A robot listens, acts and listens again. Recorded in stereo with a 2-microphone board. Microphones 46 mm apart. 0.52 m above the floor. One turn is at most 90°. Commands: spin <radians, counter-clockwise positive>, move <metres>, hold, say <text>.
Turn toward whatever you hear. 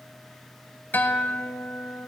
spin 0.79
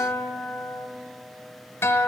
spin 1.48
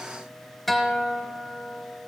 say Found it: a guitar, straight ahead, under 1 m away.